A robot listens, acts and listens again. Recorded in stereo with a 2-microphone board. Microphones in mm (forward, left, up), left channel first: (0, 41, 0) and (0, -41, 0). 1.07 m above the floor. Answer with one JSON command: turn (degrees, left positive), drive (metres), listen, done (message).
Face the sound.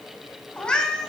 {"turn": 30}
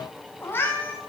{"turn": 155}
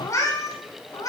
{"turn": 45}
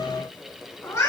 {"turn": 35}
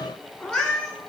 {"turn": 10}
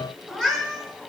{"done": "Found it: a cat meowing, straight ahead, 2 to 4 m away."}